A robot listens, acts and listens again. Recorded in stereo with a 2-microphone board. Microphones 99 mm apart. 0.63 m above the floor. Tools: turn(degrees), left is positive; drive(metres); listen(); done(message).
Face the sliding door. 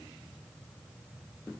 listen()
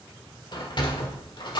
turn(degrees=50)
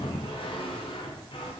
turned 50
turn(degrees=75)
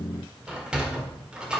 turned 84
turn(degrees=-10)
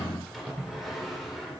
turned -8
done("Found it: a sliding door, straight ahead.")